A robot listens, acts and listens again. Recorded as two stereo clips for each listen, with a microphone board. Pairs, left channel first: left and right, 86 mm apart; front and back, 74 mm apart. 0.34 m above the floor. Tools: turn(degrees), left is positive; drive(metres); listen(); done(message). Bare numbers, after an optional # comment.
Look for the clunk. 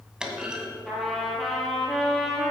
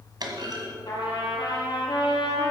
# The clunk: 170° right.
turn(-170)
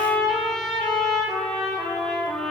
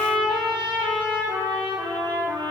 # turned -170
done("Facing where the clunk came from. I can't hear it now.")